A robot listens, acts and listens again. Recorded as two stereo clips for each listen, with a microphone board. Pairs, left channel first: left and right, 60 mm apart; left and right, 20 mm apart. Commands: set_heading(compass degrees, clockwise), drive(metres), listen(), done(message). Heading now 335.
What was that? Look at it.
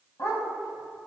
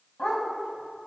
set_heading(275)
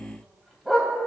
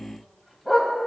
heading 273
done("Facing the dog barking.")